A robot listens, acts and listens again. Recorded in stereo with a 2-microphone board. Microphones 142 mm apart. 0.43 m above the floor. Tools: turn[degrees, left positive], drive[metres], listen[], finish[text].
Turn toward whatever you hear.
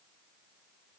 Action: listen[]
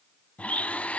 Action: turn[30]
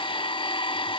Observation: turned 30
Thought: So it is at 140° left.
Action: turn[140]
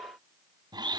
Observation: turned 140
Thought: The blender is now 30° right.
Action: turn[-30]
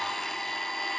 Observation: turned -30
Action: finish[Facing the blender, under 1 m away.]